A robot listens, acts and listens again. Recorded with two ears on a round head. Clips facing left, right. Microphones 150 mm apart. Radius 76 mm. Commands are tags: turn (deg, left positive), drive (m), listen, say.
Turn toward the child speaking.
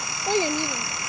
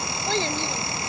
<turn deg="30"/>
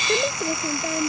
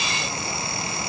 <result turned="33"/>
<listen/>
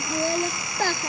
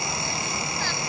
<turn deg="135"/>
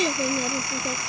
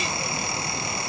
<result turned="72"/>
<turn deg="65"/>
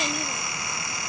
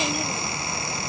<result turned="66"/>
<listen/>
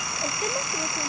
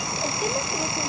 <say>Found it: a child speaking, straight ahead.</say>